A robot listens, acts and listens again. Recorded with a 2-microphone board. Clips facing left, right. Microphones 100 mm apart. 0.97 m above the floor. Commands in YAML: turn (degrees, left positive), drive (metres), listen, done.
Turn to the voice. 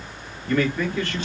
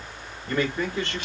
turn: -25
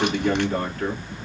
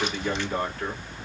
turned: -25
done: "Facing the man speaking, 2 to 4 m away."